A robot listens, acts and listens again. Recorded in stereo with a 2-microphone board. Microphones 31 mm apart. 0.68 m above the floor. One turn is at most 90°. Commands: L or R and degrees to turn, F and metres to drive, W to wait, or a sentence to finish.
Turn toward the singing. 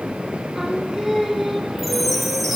R30
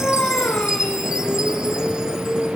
L65
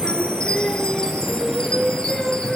L15
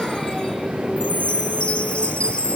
W
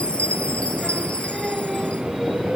Facing the singing, 2 to 4 m away.